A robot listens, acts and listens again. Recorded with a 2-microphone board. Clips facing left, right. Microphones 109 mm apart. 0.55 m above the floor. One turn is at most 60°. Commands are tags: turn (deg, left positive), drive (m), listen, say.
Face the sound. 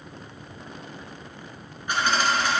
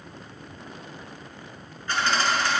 <turn deg="15"/>
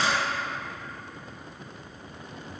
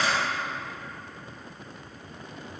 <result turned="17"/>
<turn deg="60"/>
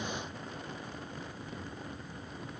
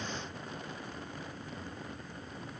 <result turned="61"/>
<turn deg="60"/>
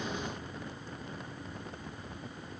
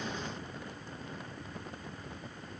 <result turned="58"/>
<turn deg="30"/>
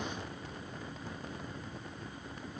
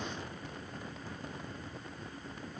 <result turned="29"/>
<say>I heard a dropped coin from this way, but can't make it out now.</say>